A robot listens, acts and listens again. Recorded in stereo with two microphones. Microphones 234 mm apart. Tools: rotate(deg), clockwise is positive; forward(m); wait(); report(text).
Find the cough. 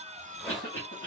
rotate(-60)
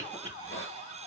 rotate(-40)
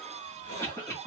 rotate(-15)
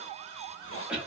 report("Found it: a cough, straight ahead.")